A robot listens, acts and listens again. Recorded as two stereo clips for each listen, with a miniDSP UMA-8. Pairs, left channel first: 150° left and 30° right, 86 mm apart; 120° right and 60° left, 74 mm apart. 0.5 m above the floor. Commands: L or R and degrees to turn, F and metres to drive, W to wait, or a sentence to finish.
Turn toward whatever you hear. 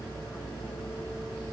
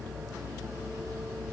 W
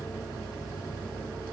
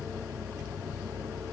W
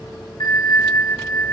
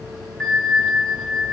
L155
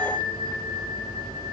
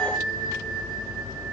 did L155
R25
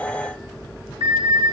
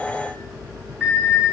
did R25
R10
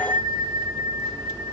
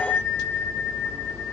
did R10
Facing the bell.